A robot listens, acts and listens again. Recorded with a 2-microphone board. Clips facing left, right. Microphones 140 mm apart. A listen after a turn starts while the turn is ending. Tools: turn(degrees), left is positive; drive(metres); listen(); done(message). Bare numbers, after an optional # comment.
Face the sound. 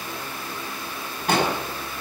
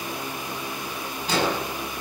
# The explosion: about 60° left or 120° left.
turn(60)
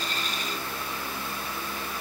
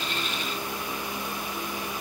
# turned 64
listen()
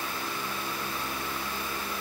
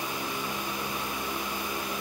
done("I heard an explosion, but can't make it out now. It was about 5° right or 60° left.")